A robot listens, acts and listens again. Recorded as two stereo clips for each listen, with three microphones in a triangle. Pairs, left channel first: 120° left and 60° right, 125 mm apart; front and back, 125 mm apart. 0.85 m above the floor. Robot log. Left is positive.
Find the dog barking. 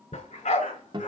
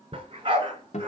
note: The dog barking: 135° left.
cmd yaw +135
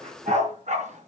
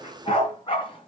note: The dog barking is now 45° right.
cmd yaw -45
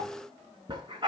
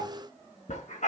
note: The dog barking is now 10° right.
cmd yaw -10
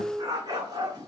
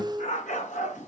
end: Facing the dog barking, over 4 m away.